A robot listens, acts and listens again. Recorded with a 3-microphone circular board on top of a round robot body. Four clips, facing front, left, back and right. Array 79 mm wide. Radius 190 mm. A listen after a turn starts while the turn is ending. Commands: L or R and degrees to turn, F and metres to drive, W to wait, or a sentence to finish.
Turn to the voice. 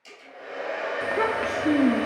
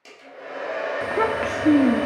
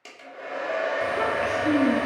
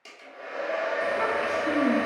L65
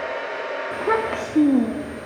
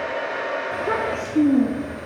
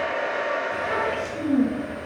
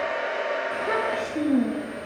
L15
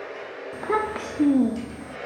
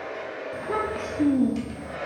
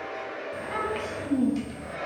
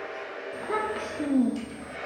Facing the child speaking.